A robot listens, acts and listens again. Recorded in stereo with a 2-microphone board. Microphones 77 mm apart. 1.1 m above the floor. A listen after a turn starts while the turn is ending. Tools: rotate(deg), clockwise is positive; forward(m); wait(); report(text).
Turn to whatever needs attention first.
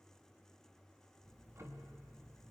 wait()
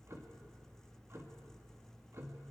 wait()
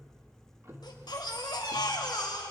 rotate(-70)
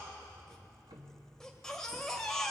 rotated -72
report("Facing the baby crying, 2 to 4 m away.")